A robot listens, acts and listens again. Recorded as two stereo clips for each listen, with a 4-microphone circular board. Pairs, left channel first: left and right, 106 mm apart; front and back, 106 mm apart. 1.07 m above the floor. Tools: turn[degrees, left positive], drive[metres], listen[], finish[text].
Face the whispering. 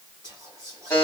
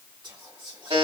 Thought: The whispering: 140° right.
Action: turn[-140]
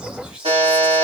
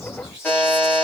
Action: finish[Found it: whispering, straight ahead, 1 to 2 m away.]